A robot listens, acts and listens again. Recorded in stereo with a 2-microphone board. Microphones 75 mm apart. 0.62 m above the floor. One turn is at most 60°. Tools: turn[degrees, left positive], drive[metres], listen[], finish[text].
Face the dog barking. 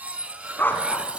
Thought: The dog barking: about 25° left or 155° left.
Action: turn[25]
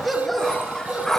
Action: finish[Facing the dog barking, 2 to 4 m away.]